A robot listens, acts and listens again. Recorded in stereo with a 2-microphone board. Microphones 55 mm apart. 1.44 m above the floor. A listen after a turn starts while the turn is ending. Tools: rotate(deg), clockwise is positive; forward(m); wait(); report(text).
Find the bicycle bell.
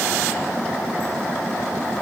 wait()
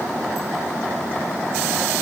wait()
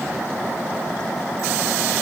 report("I can't make out a bicycle bell to turn to.")